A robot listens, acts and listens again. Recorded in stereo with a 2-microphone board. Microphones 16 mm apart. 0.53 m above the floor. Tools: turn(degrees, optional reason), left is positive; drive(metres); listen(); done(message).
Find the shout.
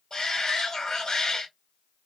turn(degrees=35, reason="The shout: about 35° left or 145° left.")
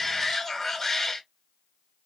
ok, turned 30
turn(degrees=15, reason="So it is at 15° left.")
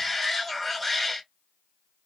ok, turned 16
done("Found it: a shout, straight ahead, 1 to 2 m away.")